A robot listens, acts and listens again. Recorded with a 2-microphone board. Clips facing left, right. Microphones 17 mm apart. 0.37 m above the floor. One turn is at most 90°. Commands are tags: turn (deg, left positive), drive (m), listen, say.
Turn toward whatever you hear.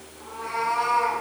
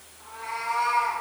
<turn deg="20"/>
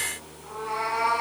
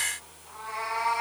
<turn deg="90"/>
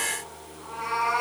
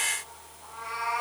<turn deg="50"/>
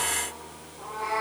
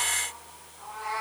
<say>Facing the cat meowing.</say>